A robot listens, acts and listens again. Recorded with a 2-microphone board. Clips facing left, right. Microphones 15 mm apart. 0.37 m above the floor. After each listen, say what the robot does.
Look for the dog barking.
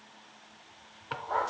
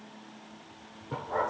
Turn 90° left.
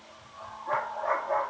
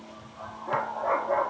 Turn 10° left.
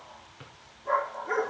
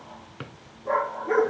Found it: a dog barking, straight ahead, over 4 m away.